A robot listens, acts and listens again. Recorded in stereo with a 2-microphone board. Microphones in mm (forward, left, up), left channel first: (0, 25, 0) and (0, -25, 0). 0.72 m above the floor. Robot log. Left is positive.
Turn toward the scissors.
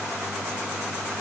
cmd idle
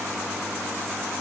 cmd idle
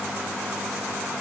end: I can't make out scissors to turn to.